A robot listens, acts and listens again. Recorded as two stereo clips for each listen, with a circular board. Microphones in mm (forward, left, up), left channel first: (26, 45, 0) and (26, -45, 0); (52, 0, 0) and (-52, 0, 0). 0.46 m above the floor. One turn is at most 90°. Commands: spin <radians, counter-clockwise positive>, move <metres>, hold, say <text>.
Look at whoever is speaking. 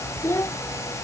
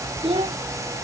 spin 1.57
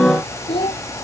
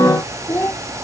spin 1.22
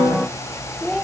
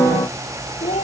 say Facing the child speaking.